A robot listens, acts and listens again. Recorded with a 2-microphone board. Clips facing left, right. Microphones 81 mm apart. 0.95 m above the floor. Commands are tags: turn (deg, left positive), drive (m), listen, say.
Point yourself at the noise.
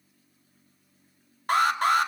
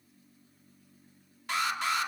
<turn deg="50"/>
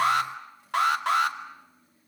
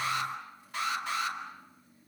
<turn deg="75"/>
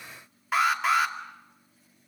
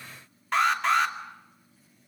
<say>Found it: an alarm, straight ahead.</say>